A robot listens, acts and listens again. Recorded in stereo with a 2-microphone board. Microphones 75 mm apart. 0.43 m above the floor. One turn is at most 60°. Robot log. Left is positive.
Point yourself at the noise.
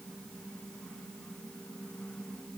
cmd idle
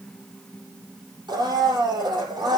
cmd yaw -60
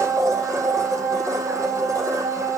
note: So it is at 45° right.
cmd yaw -45
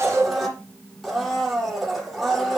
end: Facing the blender.